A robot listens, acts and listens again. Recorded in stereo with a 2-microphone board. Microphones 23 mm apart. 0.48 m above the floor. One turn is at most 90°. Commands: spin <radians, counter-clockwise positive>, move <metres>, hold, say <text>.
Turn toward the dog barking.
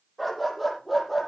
spin 0.52
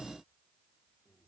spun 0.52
hold
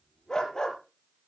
spin 1.57
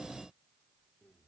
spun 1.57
spin 1.05
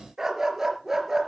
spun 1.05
spin -0.35
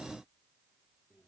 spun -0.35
hold
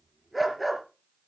say Facing the dog barking, 2 to 4 m away.